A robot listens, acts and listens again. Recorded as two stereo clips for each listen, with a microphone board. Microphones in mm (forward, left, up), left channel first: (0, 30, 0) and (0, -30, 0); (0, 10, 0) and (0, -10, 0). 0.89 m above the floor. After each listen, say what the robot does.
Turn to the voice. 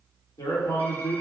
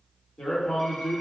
Turn 65° left.
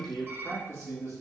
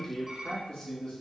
Turn 55° left.
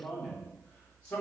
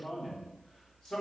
Turn 25° left.
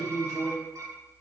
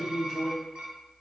Turn 15° left.
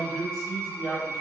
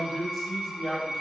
Found it: a man speaking, straight ahead.